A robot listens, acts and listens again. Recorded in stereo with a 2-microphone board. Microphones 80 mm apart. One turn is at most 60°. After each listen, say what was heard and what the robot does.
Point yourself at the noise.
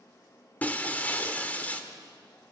The breaking glass: about 20° left or 160° left. Turn 20° left.
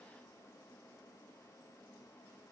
Keep listening.
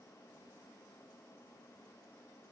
I heard breaking glass, but can't make it out now. It was about straight ahead or 140° left.